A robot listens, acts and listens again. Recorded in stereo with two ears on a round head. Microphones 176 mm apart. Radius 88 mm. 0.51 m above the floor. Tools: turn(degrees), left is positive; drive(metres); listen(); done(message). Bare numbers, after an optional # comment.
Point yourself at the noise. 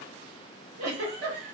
turn(-90)
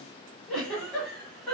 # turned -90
done("Facing the giggle.")